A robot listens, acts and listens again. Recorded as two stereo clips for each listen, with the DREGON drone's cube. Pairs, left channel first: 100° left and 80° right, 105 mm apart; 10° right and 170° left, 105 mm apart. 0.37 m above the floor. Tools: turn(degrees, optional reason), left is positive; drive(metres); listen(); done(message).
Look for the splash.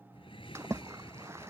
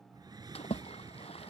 turn(degrees=-15, reason="The splash: 15° right.")
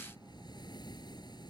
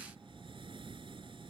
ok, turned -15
done("Facing where the splash came from. I can't hear it now.")